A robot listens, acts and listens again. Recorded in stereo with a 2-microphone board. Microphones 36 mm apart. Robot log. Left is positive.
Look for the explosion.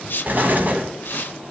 note: The explosion: about 50° right or 130° right.
cmd yaw -50
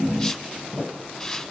cmd idle
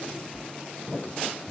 end: I heard an explosion, but can't make it out now. It was about straight ahead or 80° right.